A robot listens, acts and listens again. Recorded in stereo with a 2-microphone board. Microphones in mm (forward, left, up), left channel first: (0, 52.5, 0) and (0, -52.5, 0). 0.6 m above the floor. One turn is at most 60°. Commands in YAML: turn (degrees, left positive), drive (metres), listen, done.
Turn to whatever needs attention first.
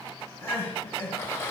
turn: 25
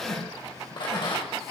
done: "Facing the crying."